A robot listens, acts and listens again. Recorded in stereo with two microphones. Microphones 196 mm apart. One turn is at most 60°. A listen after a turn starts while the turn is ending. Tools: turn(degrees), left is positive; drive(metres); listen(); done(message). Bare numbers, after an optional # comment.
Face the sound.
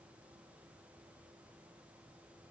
listen()
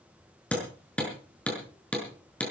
turn(30)
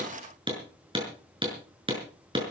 # So it is at 25° right.
turn(-25)
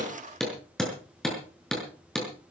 done("Found it: hammering, straight ahead, over 4 m away.")